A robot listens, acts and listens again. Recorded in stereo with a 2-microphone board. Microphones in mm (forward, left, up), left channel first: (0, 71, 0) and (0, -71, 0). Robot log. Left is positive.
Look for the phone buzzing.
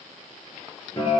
cmd idle
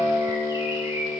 cmd idle
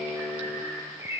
end: I can't make out a phone buzzing, only a guitar and a bird.